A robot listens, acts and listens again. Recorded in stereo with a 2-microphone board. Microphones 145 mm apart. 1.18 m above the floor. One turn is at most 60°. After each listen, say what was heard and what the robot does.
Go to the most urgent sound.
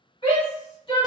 The shout: about 35° left or 145° left. Turn 35° left.
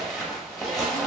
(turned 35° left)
Keep listening.
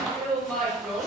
Drive 1.0 m forward.
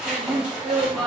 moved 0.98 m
Drive 1.0 m forward.
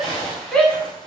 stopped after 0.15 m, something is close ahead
I am next to the shout.